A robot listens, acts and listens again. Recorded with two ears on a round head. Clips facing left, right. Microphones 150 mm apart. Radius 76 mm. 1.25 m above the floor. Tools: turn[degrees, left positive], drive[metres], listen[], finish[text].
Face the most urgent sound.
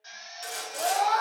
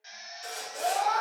Thought: The scream: about 40° left or 140° left.
Action: turn[40]
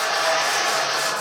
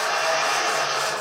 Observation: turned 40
Action: listen[]
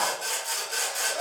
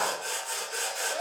Action: listen[]
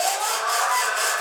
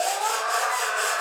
Action: finish[Facing the scream, under 1 m away.]